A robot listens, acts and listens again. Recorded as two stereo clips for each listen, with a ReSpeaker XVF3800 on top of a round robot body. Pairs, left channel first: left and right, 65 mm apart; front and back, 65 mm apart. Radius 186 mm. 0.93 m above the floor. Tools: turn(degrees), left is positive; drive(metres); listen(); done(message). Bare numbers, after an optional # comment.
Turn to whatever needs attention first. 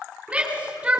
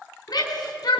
# The shout: 15° right.
turn(-15)
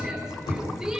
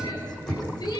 done("Found it: a shout, straight ahead, over 4 m away.")